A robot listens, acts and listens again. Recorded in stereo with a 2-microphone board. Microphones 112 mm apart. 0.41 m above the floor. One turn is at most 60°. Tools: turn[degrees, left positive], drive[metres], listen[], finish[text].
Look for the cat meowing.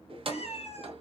Thought: The cat meowing: about 65° left or 115° left.
Action: turn[60]
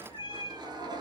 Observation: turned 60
Thought: So it is at 50° left.
Action: turn[50]
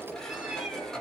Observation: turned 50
Action: listen[]
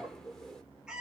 Action: finish[Facing the cat meowing.]